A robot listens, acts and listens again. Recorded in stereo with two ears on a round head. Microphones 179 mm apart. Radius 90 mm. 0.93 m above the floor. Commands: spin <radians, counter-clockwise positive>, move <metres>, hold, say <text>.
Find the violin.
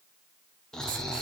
hold
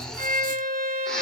spin -0.87
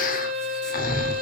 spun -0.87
spin -1.40
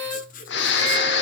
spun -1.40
spin -0.70
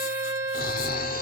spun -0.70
spin -0.17
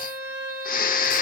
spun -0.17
spin -0.17
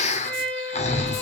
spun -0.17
say Found it: a violin, straight ahead, 1 to 2 m away.